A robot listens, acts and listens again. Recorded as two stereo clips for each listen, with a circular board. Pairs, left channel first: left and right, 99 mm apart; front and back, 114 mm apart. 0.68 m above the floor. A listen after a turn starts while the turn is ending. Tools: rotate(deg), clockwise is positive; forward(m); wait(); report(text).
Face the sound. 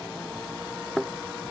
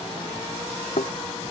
report("Facing the thud.")